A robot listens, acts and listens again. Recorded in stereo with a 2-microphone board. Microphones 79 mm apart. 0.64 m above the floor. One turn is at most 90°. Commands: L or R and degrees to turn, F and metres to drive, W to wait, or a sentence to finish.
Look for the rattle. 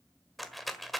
L30
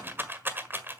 R30
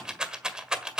R10
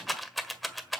Found it: a rattle, straight ahead.